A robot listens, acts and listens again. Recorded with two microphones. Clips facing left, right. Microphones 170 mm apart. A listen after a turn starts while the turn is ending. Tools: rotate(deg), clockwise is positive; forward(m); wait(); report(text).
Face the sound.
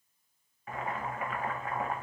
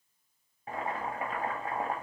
rotate(30)
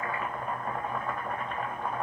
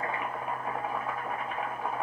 report("Facing the boiling.")